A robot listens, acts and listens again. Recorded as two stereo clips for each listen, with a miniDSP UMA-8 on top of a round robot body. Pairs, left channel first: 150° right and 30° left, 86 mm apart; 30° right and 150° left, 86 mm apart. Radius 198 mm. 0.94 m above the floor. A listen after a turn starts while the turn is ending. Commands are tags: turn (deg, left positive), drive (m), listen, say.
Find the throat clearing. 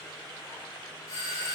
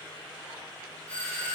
<listen/>
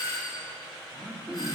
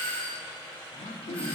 <turn deg="-50"/>
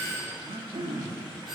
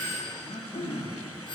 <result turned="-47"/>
<say>Facing the throat clearing, 1 to 2 m away.</say>